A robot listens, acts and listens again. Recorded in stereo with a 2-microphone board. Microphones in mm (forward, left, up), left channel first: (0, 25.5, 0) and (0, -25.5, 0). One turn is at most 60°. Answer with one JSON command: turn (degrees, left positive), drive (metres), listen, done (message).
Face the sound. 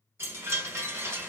{"turn": -60}
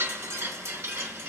{"turn": -60}
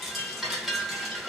{"done": "Facing the chime."}